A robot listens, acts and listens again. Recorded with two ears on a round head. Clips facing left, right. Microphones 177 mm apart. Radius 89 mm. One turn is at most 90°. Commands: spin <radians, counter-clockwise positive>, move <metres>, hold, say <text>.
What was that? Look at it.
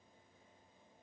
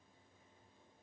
hold
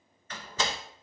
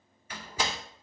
spin -0.52
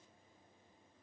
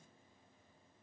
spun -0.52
hold
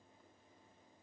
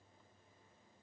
say I heard a door slam, but can't make it out now. It was about 20° left or 140° right.